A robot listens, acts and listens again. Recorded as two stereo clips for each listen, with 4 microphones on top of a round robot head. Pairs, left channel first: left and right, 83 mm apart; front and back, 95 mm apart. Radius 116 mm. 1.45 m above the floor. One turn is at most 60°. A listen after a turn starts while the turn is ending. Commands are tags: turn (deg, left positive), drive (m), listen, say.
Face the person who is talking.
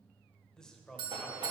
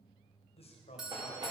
<turn deg="10"/>
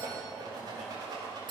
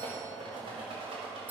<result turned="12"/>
<listen/>
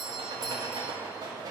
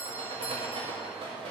<listen/>
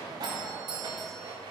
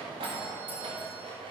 <say>I heard a man speaking from this way, but can't make it out now.</say>